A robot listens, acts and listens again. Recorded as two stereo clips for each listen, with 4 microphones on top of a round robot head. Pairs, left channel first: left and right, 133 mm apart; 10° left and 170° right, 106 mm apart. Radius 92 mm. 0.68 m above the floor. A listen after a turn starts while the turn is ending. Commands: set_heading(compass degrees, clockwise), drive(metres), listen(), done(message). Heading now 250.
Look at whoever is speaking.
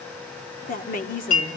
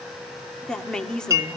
set_heading(155)
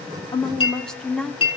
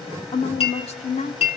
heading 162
done("Found it: a woman speaking, straight ahead, 1 to 2 m away.")